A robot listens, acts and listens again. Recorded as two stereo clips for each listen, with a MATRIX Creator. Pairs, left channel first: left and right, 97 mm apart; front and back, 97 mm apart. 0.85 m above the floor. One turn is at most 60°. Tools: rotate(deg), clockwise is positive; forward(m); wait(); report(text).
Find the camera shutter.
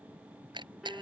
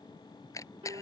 rotate(55)
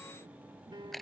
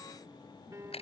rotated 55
report("Found it: a camera shutter, straight ahead.")